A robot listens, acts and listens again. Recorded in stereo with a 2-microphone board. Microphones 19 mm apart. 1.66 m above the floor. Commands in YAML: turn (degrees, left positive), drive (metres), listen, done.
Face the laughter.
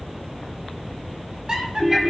turn: -45
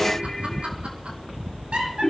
turn: -60
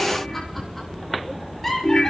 turn: 15
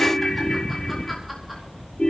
listen: true
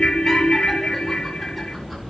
listen: true
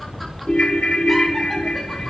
done: "Facing where the laughter came from. I can't hear it now."